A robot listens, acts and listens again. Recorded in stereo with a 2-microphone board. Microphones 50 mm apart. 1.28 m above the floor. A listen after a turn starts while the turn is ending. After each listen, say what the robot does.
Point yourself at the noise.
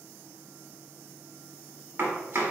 Turn 60° right.
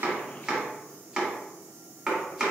Turn 10° right.
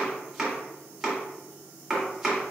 Found it: chopping, straight ahead, 1 to 2 m away.